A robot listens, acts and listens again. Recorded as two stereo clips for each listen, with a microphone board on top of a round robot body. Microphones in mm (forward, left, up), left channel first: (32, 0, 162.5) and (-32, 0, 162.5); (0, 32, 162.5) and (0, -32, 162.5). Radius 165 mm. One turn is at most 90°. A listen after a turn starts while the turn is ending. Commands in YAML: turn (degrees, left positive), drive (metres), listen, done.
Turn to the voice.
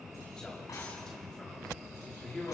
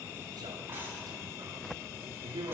turn: -80
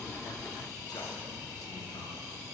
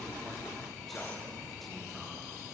listen: true
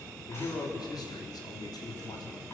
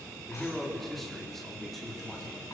done: "Facing the man speaking."